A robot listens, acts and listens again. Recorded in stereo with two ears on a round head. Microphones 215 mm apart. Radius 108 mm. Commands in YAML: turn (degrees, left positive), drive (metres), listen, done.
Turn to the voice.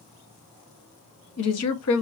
turn: 70
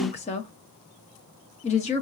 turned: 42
turn: 30
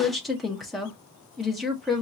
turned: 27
done: "Facing the woman speaking, 1 to 2 m away."